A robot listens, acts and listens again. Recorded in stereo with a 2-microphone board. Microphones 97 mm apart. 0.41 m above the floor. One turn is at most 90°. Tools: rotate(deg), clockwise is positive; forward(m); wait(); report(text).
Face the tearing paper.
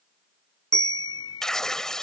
rotate(-30)
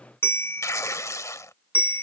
rotate(-90)
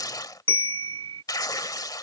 rotate(-50)
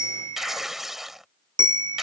report("Found it: tearing paper, straight ahead.")